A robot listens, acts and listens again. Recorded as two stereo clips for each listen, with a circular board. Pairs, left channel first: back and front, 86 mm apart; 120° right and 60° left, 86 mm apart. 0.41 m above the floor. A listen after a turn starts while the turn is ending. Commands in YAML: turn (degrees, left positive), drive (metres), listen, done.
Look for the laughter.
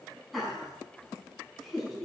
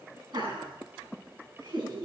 turn: 90
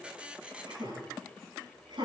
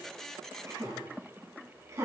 turn: 10
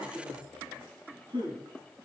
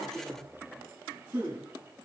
done: "Facing the laughter."